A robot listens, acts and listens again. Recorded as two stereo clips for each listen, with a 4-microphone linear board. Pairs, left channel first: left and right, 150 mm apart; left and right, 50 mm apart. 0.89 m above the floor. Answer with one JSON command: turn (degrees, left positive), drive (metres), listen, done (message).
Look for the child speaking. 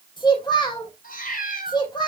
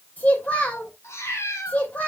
{"turn": 30}
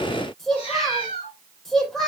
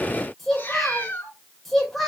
{"done": "Facing the child speaking."}